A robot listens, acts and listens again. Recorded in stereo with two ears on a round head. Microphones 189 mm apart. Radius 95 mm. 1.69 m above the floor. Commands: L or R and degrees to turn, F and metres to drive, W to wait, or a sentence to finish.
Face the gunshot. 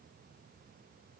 W
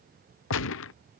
L65
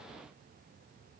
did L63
W
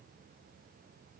I heard a gunshot, but can't make it out now. It was about straight ahead or 50° left.